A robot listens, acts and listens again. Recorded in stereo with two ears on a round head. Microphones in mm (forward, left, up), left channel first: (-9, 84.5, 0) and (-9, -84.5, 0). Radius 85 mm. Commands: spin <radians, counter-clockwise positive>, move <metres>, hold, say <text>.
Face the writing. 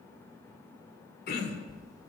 spin 0.44
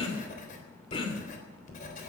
spin 2.27
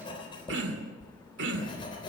spin 0.44
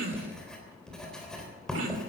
say Found it: writing, straight ahead, 2 to 4 m away.